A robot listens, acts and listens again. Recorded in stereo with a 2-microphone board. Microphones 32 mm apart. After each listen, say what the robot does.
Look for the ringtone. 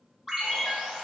Turn 30° right.
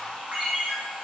Turn 140° right.
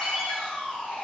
Found it: a ringtone, straight ahead, under 1 m away.